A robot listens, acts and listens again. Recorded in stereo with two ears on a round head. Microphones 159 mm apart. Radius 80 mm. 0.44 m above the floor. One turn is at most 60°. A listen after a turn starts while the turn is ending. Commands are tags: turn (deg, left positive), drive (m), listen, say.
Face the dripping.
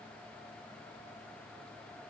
<listen/>
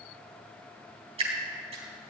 <turn deg="-35"/>
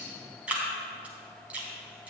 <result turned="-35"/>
<turn deg="-10"/>
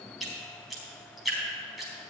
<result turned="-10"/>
<say>Found it: dripping, straight ahead, 2 to 4 m away.</say>